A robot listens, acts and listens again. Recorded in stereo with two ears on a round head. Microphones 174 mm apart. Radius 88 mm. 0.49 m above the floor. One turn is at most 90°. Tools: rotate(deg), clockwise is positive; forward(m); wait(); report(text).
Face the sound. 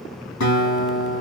rotate(-90)
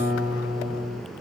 rotate(10)
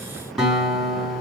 report("Found it: a guitar, straight ahead, 2 to 4 m away.")